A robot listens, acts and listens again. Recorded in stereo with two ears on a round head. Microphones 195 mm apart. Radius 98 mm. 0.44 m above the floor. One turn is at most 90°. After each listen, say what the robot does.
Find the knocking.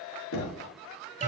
Turn 65° left.
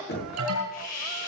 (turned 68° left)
Turn 45° left.
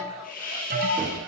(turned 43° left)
Facing the knocking.